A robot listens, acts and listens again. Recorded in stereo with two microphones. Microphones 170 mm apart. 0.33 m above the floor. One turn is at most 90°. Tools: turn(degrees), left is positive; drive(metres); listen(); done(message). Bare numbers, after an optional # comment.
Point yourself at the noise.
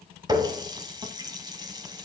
# The running tap: about 25° right or 155° right.
turn(-25)
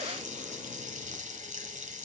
# So it is at 130° right.
turn(-90)
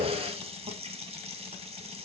# The running tap is now 40° right.
turn(-40)
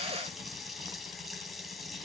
done("Found it: a running tap, straight ahead, 1 to 2 m away.")